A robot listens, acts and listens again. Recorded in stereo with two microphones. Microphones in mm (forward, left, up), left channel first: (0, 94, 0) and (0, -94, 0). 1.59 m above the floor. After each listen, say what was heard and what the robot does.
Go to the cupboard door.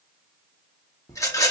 Keep listening.
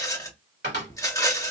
The cupboard door: about 65° right or 115° right. Turn 65° right.
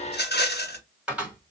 Drive 1.0 m forward.
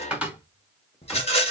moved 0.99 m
Drive 1.0 m forward.
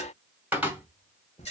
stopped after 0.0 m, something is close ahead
The cupboard door is now 10° right. Turn 10° right.
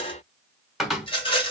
Arrived at the cupboard door, straight ahead.